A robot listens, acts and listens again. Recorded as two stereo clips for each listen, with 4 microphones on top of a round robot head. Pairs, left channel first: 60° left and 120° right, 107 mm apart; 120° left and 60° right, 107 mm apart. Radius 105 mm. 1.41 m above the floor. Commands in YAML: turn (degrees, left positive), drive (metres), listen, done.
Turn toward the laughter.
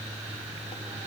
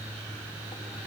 listen: true
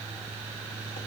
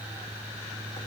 listen: true
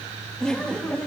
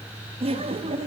turn: -25
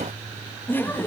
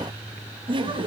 turn: -15
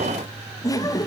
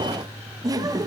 done: "Facing the laughter, 2 to 4 m away."